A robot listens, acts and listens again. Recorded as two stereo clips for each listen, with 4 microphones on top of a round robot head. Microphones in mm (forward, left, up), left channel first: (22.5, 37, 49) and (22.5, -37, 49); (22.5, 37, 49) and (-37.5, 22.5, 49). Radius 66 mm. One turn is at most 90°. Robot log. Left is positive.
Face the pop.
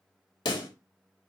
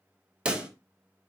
note: The pop: 120° left.
cmd yaw +90
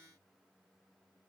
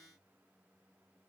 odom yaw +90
note: Nothing new. It was at 30° left.
cmd yaw +30
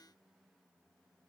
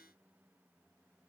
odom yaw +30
end: Facing where the pop came from. I can't hear it now.